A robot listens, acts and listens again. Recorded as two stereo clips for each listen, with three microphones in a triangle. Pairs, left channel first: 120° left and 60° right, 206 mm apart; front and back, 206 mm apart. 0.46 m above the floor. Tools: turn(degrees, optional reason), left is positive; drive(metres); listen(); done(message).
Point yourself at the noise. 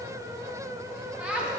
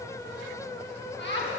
turn(degrees=25, reason="The laughter: 25° left.")
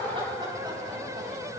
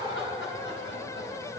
turn(degrees=10, reason="The laughter is now 10° left.")
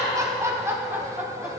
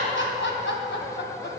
turn(degrees=25, reason="The laughter is now 25° left.")
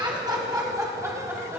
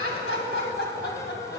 turn(degrees=20, reason="The laughter is now 20° left.")
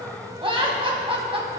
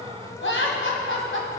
done("Facing the laughter.")